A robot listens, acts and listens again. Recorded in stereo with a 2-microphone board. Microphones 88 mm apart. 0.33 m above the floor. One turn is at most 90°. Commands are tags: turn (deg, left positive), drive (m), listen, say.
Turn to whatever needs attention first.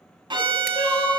<turn deg="55"/>
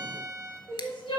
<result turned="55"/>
<turn deg="70"/>
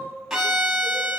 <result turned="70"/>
<listen/>
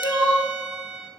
<turn deg="30"/>
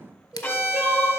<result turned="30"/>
<say>Found it: crying, straight ahead, 2 to 4 m away.</say>